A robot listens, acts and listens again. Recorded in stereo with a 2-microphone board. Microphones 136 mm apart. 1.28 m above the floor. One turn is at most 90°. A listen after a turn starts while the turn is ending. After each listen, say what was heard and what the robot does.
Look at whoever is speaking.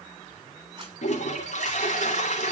Keep listening.
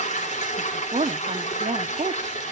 The woman speaking: about 60° right or 120° right. Turn 60° right.
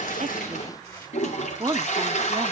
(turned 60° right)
So it is at 35° right. Turn 35° right.
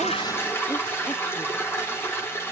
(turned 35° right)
Keep listening.
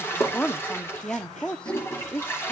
The woman speaking is now 10° left. Turn 10° left.
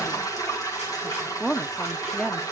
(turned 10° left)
Facing the woman speaking.